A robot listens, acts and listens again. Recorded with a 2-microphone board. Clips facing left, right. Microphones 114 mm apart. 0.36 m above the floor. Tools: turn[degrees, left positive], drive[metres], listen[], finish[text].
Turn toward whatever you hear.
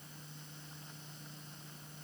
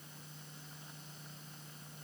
Action: listen[]
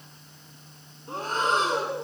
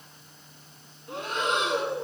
Thought: The breathing: about 40° left or 140° left.
Action: turn[40]
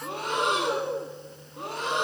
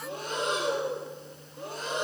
Thought: So it is at 100° left.
Action: turn[100]
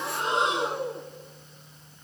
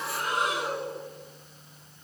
Thought: The breathing is now 25° left.
Action: turn[25]
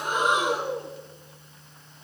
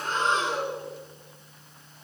Thought: The breathing is now 15° left.
Action: turn[15]
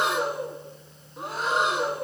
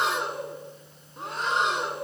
Action: finish[Found it: breathing, straight ahead.]